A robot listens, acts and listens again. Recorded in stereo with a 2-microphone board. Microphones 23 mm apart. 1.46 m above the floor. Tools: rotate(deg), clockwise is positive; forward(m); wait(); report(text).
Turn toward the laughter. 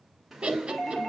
rotate(45)
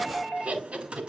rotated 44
rotate(95)
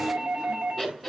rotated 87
rotate(10)
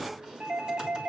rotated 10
wait()
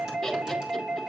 report("Found it: laughter, straight ahead, 2 to 4 m away.")